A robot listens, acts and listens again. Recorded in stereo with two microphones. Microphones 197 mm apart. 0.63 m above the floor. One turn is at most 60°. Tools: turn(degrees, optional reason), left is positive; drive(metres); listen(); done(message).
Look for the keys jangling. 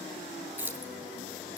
turn(degrees=-30)
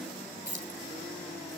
turn(degrees=-60, reason="So it is at 140° right.")
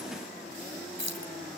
turn(degrees=-60, reason="The keys jangling is now 95° right.")
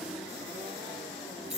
turn(degrees=-35, reason="The keys jangling is now 35° right.")
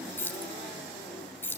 turn(degrees=10, reason="The keys jangling is now 10° left.")
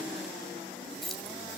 done("Facing the keys jangling.")